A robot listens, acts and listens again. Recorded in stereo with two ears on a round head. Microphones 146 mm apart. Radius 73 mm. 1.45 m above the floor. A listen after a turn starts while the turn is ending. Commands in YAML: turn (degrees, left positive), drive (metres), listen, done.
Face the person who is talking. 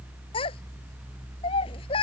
turn: 35
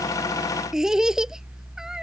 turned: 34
done: "Facing the child speaking."